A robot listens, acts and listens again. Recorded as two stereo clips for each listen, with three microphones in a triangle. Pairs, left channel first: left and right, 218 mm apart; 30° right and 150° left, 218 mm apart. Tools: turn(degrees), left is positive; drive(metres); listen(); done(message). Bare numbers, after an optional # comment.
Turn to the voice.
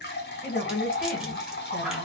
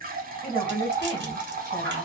# The woman speaking: 40° left.
turn(40)
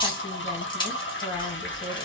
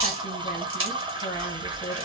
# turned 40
# The woman speaking is now 15° left.
turn(15)
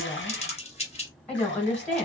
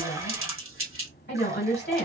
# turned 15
done("Facing the woman speaking.")